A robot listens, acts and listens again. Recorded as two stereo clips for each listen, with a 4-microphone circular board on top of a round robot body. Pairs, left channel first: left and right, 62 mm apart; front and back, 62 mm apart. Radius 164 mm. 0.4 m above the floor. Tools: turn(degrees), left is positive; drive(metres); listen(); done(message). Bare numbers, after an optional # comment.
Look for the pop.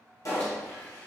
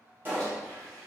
# The pop: 120° left.
turn(120)
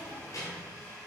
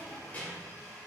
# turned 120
done("I heard a pop from this way, but can't make it out now.")